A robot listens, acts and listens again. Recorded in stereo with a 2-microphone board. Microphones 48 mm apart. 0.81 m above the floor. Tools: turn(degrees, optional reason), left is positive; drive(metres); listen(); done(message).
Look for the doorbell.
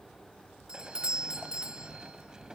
turn(degrees=-20, reason="The doorbell: about 20° right or 160° right.")
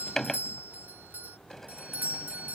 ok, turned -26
turn(degrees=-130, reason="So it is at 130° right.")
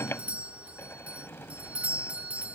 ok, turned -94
turn(degrees=-35, reason="The doorbell is now 35° right.")
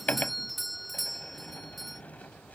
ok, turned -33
done("Found it: a doorbell, straight ahead.")